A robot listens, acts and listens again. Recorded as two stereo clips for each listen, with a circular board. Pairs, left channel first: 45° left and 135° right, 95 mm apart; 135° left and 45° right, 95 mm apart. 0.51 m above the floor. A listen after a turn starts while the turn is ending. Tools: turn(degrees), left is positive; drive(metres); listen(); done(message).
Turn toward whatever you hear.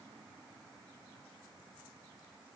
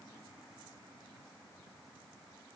listen()
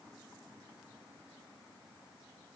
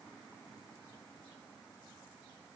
listen()
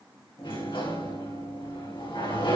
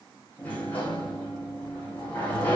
turn(degrees=60)
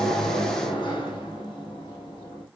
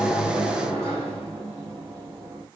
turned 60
turn(degrees=15)
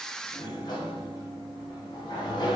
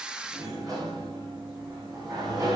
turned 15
done("Found it: a sliding door, straight ahead.")